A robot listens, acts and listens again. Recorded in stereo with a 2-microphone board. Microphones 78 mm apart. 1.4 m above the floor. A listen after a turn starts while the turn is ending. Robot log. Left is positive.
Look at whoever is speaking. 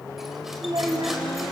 cmd yaw -90
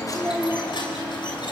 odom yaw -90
cmd idle
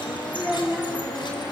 note: The child speaking is now 15° right.
cmd yaw -15
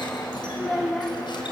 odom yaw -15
end: Found it: a child speaking, straight ahead, 2 to 4 m away.